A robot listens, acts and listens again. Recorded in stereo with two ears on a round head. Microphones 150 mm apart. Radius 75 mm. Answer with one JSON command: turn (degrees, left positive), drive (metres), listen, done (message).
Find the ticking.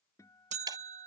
{"turn": -20}
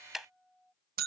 {"done": "Found it: ticking, straight ahead."}